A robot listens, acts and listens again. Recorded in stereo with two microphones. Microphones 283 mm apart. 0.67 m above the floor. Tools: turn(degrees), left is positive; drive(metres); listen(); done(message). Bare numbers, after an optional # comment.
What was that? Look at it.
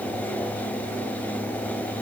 listen()
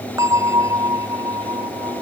turn(-30)
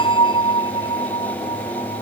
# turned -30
# So it is at 20° left.
turn(20)
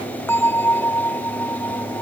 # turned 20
# The bell is now 10° left.
turn(10)
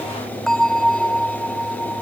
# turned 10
done("Facing the bell.")